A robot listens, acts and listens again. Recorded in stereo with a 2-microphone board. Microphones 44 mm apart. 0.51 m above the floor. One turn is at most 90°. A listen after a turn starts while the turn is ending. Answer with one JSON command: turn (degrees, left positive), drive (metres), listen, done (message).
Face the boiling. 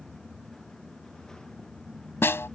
{"listen": true}
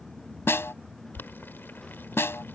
{"turn": 55}
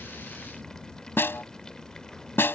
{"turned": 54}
{"listen": true}
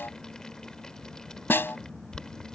{"turn": 20}
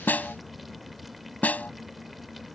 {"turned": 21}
{"listen": true}
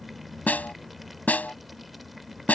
{"listen": true}
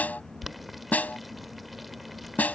{"done": "Facing the boiling."}